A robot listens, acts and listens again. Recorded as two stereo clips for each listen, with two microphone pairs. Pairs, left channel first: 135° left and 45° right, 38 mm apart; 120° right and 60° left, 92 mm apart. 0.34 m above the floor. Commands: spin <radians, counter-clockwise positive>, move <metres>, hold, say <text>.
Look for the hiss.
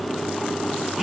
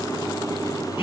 hold
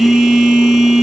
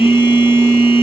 hold
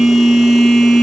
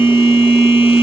say I can't make out a hiss, only a phone buzzing.